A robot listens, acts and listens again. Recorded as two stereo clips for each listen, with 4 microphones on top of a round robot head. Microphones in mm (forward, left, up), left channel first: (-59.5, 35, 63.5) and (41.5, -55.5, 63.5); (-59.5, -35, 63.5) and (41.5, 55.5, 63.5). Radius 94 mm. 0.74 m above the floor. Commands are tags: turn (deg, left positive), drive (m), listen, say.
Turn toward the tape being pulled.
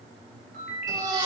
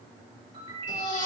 <listen/>
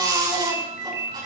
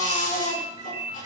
<listen/>
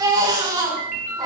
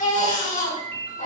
<say>I can't make out tape being pulled, only a ringtone and a baby crying.</say>